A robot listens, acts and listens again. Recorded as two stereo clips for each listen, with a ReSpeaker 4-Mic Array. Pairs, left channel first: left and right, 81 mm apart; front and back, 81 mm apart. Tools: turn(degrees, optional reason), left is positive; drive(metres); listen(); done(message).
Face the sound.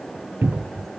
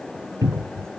turn(degrees=-150, reason="The cupboard door: 150° right.")
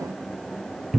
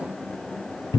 done("Facing the cupboard door, under 1 m away.")